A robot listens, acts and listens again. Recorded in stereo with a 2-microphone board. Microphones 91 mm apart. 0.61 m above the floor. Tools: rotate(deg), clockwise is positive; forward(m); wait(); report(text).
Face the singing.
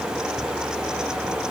wait()
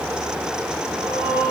rotate(-35)
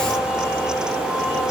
wait()
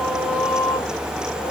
rotate(-110)
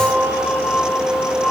rotate(-10)
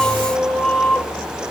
report("Found it: singing, straight ahead, 2 to 4 m away.")